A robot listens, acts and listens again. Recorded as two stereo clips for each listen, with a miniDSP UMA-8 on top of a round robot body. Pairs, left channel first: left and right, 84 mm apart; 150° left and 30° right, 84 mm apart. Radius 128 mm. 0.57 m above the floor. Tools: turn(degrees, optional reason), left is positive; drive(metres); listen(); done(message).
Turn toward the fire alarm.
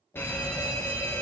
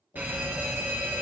turn(degrees=35, reason="The fire alarm: 35° left.")
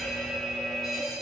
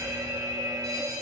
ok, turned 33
done("Found it: a fire alarm, straight ahead.")